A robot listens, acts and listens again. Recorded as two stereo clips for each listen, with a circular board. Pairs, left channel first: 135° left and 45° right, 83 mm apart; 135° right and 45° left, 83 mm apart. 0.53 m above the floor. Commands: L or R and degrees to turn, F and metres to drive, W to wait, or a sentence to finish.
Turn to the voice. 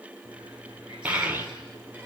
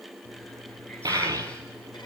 L20
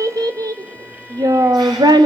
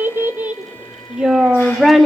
R50
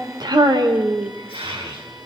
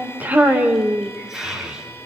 R35
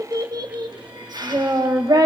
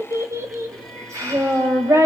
R10
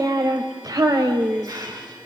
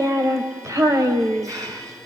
Facing the child speaking.